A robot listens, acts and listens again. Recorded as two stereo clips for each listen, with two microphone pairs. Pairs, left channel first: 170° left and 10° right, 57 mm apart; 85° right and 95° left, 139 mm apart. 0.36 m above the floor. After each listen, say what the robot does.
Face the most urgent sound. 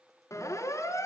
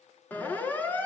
Turn 165° right.
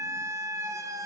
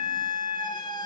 Turn 25° right.
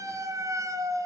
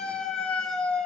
Facing the siren.